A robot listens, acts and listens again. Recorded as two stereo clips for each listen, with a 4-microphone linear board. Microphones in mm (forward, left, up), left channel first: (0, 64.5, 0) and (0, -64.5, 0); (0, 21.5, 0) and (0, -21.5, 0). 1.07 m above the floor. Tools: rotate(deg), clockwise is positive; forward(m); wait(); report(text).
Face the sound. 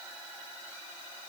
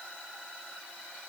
wait()
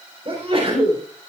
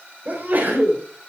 rotate(45)
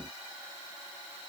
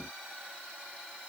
wait()
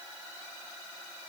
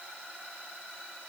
report("I heard a sneeze, but can't make it out now. It was about straight ahead or 90° right.")